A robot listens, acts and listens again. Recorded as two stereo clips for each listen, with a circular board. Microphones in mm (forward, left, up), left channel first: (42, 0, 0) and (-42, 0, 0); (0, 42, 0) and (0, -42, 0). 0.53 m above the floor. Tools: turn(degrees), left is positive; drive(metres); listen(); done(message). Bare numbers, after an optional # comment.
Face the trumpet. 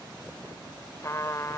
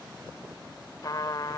# The trumpet: 50° left.
turn(50)
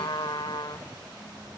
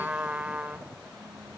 # The trumpet is now 15° right.
turn(-15)
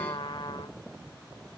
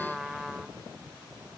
done("Facing the trumpet.")